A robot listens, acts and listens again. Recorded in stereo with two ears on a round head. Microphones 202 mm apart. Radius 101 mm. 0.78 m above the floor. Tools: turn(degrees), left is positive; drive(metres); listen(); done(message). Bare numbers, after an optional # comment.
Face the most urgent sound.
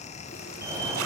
turn(-30)
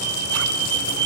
# So it is at 135° right.
turn(-135)
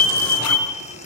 # The fire alarm is now 30° left.
turn(30)
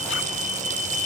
done("Found it: a fire alarm, straight ahead.")